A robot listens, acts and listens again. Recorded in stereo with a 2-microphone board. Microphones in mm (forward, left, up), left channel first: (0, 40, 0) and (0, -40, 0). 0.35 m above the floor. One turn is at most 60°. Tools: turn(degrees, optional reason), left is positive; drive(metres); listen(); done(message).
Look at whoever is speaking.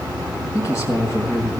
turn(degrees=35, reason="The man speaking: about 35° left or 145° left.")
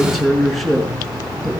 done("Found it: a man speaking, straight ahead, over 4 m away.")